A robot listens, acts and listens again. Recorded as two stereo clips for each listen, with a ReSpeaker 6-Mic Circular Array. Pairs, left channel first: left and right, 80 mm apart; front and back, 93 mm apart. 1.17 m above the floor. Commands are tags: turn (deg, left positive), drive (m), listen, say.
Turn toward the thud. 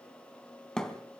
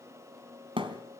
<turn deg="170"/>
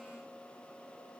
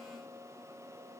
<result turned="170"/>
<say>I heard a thud from this way, but can't make it out now.</say>